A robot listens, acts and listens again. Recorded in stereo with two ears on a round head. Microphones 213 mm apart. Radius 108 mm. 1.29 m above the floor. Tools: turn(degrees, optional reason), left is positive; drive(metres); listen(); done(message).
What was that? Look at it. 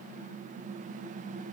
listen()
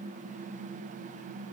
listen()
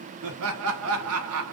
turn(degrees=-65, reason="The laughter: about 65° right or 115° right.")
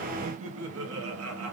turn(degrees=-65, reason="So it is at 65° right.")
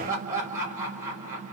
turn(degrees=-10, reason="The laughter is now 10° right.")
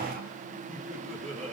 done("Facing the laughter, 1 to 2 m away.")